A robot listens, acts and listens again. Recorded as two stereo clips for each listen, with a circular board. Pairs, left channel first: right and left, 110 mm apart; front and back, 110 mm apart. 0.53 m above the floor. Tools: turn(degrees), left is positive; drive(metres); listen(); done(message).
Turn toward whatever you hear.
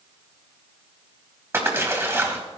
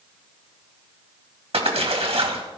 turn(degrees=155)
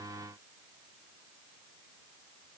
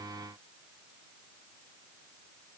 done("Facing where the splash came from. I can't hear it now.")